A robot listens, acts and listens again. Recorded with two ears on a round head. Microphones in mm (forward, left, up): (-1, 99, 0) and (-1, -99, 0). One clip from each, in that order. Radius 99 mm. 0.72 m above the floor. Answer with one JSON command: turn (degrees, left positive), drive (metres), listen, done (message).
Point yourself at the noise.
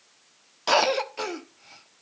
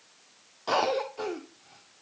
{"turn": 65}
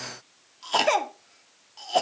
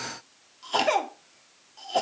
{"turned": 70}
{"turn": 20}
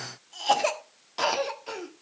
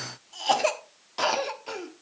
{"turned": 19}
{"done": "Facing the cough, 1 to 2 m away."}